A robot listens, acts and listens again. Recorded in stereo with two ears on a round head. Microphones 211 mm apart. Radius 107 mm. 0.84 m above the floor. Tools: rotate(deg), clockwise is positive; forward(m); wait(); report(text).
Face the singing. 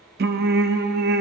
rotate(45)
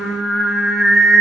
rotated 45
report("Found it: singing, straight ahead.")